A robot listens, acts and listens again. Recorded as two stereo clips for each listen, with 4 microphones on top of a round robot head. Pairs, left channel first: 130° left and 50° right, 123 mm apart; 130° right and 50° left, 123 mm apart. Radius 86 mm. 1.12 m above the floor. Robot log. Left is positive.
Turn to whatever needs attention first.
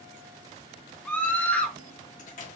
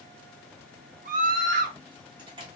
note: The scream: 50° left.
cmd yaw +50
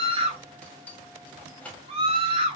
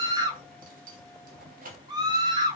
end: Found it: a scream, straight ahead, 1 to 2 m away.